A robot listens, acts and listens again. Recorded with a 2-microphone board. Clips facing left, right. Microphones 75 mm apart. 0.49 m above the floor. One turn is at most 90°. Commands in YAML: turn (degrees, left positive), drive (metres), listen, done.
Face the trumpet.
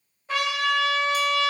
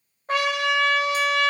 turn: -55
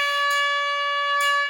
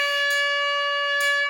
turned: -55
turn: -20
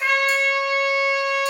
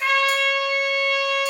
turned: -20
done: "Found it: a trumpet, straight ahead, 1 to 2 m away."